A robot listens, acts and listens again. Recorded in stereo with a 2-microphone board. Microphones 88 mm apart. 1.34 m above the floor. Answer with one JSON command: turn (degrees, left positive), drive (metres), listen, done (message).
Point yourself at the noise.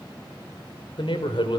{"turn": 65}
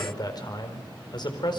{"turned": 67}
{"turn": 55}
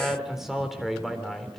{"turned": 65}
{"done": "Facing the man speaking, 2 to 4 m away."}